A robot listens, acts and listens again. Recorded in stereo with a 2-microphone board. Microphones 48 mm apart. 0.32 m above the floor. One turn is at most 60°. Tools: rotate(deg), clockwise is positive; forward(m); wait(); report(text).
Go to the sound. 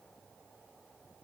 wait()
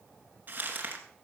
rotate(40)
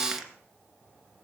forward(1.0)
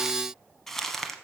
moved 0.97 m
forward(1.0)
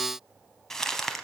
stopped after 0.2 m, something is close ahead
rotate(-10)
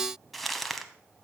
report("I am next to the crumpling.")